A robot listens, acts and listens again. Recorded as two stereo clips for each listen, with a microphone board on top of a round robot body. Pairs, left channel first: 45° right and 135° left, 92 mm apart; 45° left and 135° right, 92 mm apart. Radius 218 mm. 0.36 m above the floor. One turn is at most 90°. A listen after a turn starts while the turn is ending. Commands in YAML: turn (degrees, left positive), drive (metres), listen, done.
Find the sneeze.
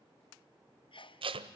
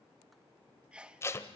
turn: -55
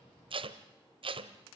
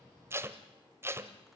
done: "I heard a sneeze from this way, but can't make it out now."